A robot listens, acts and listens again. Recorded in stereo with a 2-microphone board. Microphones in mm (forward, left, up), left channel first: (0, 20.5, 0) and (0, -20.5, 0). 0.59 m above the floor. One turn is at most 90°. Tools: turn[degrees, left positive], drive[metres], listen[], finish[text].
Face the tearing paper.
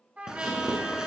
Thought: The tearing paper: about 15° right or 165° right.
Action: turn[-15]
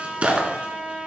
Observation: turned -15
Thought: So it is at 150° right.
Action: turn[-90]
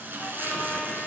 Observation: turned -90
Thought: The tearing paper is now 60° right.
Action: turn[-60]
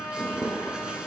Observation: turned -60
Thought: The tearing paper is now 25° right.
Action: turn[-25]
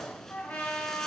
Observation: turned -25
Action: listen[]
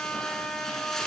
Thought: The tearing paper is now 10° left.
Action: turn[10]
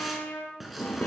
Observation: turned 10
Action: finish[Facing the tearing paper.]